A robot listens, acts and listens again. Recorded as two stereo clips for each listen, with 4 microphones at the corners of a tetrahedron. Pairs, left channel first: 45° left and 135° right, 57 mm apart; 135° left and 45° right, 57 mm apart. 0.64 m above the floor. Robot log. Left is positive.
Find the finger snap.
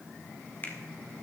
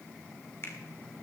note: The finger snap: 100° left.
cmd yaw +100
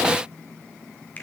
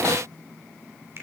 note: The finger snap is now 10° right.
cmd yaw -10
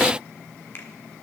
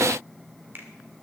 end: Facing the finger snap.